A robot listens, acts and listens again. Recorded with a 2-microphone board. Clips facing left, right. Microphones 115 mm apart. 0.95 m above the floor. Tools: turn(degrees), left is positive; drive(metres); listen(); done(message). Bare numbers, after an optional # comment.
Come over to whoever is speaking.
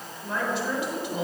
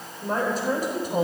# The woman speaking: about 45° right or 135° right.
turn(-45)
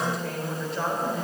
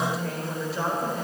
drive(1.0)
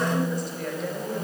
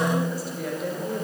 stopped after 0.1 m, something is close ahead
done("Something is in my way. I am facing the woman speaking but have not reached it.")